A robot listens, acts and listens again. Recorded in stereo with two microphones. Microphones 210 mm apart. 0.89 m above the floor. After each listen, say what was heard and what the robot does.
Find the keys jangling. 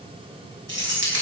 The keys jangling: about 75° right or 105° right. Turn 75° right.
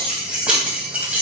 So it is at 10° right. Turn 10° right.
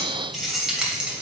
Found it: keys jangling, straight ahead.